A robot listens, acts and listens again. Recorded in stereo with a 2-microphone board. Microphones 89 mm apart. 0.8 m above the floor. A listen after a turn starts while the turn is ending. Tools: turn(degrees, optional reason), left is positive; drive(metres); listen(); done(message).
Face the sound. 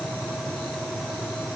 listen()
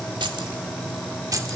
turn(degrees=-40, reason="The keys jangling: about 40° right or 140° right.")
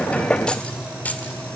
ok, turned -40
turn(degrees=20, reason="So it is at 20° left.")
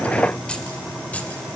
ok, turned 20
turn(degrees=15, reason="The keys jangling is now 15° left.")
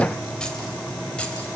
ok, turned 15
turn(degrees=15, reason="The keys jangling is now 15° left.")
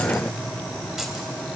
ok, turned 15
listen()
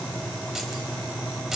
done("Facing the keys jangling.")